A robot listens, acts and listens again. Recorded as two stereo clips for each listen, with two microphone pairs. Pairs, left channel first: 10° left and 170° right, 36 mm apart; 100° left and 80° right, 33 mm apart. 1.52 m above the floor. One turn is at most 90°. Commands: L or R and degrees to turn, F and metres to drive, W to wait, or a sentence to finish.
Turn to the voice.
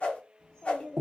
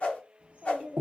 R55
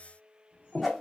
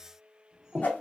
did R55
R10
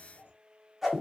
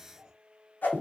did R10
Facing the child speaking, 1 to 2 m away.